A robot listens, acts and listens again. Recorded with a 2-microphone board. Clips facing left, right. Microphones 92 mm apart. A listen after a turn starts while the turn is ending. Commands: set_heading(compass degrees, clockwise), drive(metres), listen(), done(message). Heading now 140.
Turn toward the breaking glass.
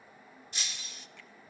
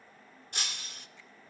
set_heading(195)
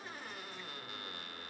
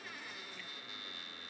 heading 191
listen()
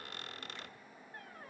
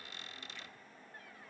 done("I heard breaking glass, but can't make it out now. It was about 5° right or 75° right.")